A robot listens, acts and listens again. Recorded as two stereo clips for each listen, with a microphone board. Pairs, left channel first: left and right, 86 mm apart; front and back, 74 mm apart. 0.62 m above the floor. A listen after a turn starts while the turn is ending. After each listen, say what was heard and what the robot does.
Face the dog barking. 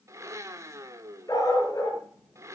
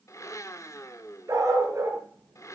The dog barking: 130° left. Turn 130° left.
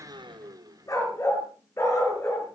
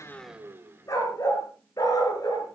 The dog barking is now 35° left. Turn 35° left.
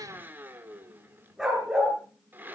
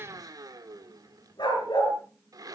Found it: a dog barking, straight ahead, over 4 m away.